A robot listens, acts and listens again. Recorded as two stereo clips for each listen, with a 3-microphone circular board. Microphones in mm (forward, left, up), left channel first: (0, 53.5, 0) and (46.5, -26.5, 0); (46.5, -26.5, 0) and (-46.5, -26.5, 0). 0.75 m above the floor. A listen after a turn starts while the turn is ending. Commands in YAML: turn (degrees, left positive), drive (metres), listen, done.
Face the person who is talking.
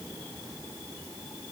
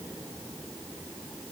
listen: true
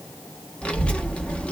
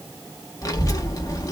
turn: 45
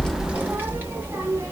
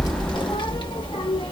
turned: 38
done: "Found it: a child speaking, straight ahead."